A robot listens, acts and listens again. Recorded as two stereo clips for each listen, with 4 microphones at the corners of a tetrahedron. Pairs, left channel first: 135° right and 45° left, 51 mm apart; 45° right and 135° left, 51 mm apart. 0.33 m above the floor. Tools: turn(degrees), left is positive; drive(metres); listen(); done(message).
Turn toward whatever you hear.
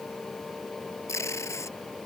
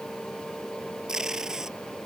turn(degrees=-145)
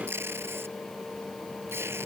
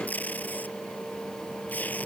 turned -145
turn(degrees=10)
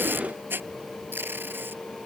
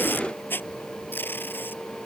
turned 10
done("Facing the tape being pulled.")